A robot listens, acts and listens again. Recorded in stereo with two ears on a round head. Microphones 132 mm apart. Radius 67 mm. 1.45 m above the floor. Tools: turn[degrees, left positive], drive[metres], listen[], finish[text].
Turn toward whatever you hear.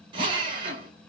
Thought: The drill: about 30° right or 150° right.
Action: turn[-30]
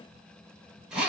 Action: finish[Found it: a drill, straight ahead, 1 to 2 m away.]